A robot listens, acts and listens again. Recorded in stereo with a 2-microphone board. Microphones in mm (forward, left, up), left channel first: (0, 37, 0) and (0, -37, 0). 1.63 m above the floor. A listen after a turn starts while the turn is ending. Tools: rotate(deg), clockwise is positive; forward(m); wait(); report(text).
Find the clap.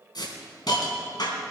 wait()
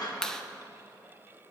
rotate(-30)
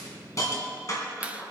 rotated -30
rotate(20)
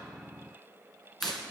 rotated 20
wait()
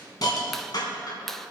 report("Found it: a clap, straight ahead.")